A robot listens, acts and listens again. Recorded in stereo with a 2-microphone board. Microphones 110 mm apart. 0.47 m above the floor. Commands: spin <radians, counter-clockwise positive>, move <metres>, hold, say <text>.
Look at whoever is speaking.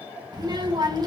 spin -0.70
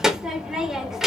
say Found it: a child speaking, straight ahead, under 1 m away.